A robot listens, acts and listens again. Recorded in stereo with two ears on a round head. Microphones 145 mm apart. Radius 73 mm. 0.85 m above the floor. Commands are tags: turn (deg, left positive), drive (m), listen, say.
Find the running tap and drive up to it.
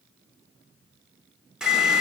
<turn deg="-30"/>
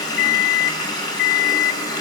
<turn deg="25"/>
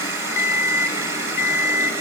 <turn deg="-15"/>
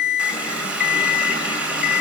<turn deg="-10"/>
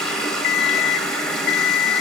<drive m="1.0"/>
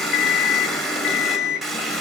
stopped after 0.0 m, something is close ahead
<say>Something is in my way. I am facing the running tap but have not reached it.</say>